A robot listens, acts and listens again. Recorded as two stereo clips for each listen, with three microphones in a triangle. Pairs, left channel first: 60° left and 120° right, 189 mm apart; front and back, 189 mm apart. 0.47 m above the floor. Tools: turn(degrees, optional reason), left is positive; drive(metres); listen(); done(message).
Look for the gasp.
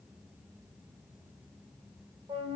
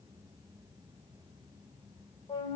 listen()
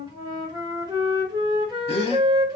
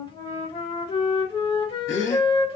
done("Found it: a gasp, straight ahead.")